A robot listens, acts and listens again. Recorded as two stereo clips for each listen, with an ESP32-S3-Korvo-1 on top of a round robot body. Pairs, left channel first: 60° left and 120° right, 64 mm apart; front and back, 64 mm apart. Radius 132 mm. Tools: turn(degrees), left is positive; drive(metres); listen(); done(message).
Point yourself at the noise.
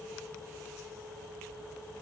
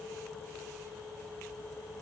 listen()
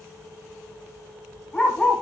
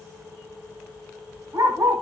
turn(degrees=140)
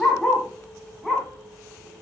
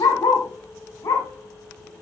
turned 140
turn(degrees=-30)
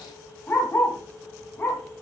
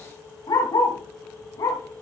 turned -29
done("Facing the dog barking, 2 to 4 m away.")